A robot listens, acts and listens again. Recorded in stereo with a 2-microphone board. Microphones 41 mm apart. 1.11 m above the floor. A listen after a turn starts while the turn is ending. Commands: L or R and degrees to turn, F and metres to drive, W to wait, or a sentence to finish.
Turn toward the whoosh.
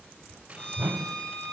R60
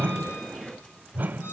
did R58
R50
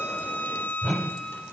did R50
Found it: a whoosh, straight ahead.